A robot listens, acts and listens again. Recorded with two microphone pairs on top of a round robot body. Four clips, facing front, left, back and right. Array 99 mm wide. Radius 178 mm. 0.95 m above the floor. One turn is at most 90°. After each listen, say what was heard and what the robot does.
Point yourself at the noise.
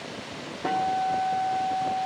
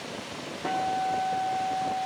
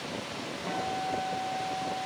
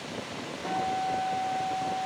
The guitar: 20° left. Turn 20° left.
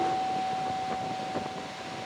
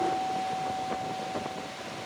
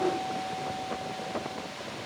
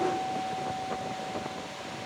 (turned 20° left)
Found it: a guitar, straight ahead, 2 to 4 m away.